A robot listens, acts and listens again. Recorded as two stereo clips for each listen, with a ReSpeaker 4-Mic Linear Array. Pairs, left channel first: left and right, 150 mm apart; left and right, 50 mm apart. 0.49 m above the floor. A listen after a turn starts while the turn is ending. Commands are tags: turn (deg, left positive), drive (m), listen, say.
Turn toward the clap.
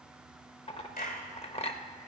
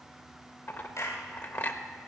<turn deg="70"/>
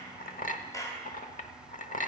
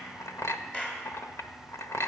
<turn deg="20"/>
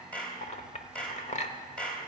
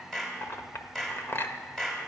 <say>Found it: a clap, straight ahead, 2 to 4 m away.</say>